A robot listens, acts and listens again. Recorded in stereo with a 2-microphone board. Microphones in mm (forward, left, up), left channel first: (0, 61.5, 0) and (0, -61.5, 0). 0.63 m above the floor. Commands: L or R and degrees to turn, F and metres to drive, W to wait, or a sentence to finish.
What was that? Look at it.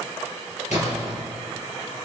L75
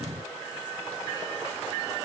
W
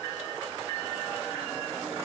I heard a splash, but can't make it out now. It was about straight ahead or 30° left.